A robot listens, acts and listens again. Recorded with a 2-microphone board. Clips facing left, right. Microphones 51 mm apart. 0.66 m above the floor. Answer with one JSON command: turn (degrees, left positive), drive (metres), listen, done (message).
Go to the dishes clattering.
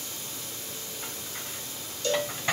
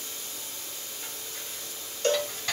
{"turn": 25}
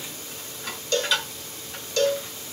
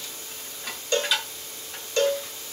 {"drive": 1.0}
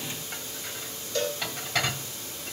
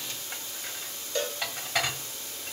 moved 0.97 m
{"drive": 1.0}
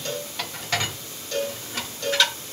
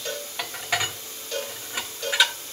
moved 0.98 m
{"turn": -10}
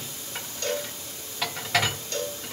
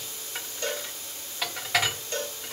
{"drive": 1.0}
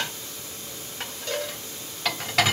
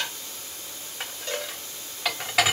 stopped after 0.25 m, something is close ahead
{"done": "I am next to the dishes clattering."}